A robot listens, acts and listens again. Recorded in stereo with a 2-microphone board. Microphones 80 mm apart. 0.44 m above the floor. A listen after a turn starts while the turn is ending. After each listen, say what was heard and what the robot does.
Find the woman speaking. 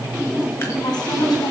The woman speaking: about 65° left or 115° left. Turn 65° left.
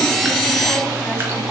Keep listening.
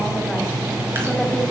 Keep listening.
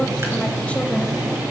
I heard a woman speaking, but can't make it out now. It was about straight ahead or 50° left.